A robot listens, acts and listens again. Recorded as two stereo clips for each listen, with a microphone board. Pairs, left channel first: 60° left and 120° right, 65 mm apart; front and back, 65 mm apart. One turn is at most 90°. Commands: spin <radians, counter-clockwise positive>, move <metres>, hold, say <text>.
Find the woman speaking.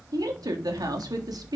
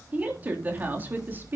spin -1.57
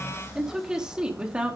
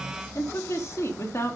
spin -0.79
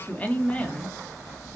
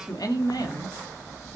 spin -0.17
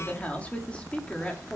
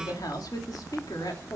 spin -0.17
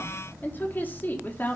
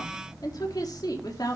say Facing the woman speaking, 2 to 4 m away.